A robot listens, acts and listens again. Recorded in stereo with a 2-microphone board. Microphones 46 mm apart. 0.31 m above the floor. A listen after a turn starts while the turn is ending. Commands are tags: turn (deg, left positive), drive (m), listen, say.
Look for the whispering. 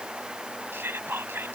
<turn deg="-55"/>
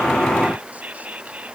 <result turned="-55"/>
<turn deg="-40"/>
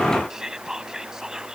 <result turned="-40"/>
<turn deg="-15"/>
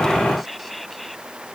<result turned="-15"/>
<listen/>
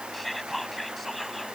<say>Found it: whispering, straight ahead.</say>